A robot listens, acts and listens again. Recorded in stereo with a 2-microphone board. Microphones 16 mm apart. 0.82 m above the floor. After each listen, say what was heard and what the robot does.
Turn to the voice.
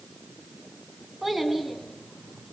Turn 30° right.
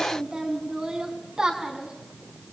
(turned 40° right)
So it is at 125° right. Turn 125° right.
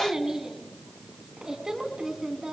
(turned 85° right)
The child speaking is now 40° right. Turn 40° right.
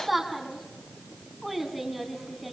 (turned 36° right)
Found it: a child speaking, straight ahead.